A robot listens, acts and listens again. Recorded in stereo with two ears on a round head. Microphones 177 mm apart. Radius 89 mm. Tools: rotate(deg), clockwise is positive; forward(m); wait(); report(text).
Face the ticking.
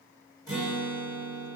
wait()
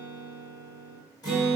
wait()
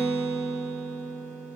report("I can't make out ticking, only a guitar.")